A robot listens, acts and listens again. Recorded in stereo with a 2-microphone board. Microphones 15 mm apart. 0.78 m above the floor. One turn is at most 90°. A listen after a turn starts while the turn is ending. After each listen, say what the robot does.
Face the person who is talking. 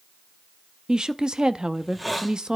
Turn 55° right.
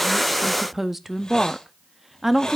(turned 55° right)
Turn 15° right.
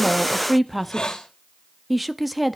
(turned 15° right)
Facing the woman speaking, under 1 m away.